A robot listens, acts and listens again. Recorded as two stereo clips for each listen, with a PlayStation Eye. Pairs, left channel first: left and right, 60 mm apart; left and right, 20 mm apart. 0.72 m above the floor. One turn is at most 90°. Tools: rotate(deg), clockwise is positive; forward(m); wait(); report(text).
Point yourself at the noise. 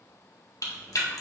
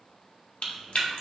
rotate(-70)
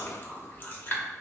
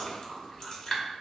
rotate(-35)
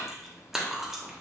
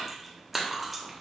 rotate(10)
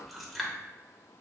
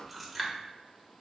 report("Found it: chewing, straight ahead, under 1 m away.")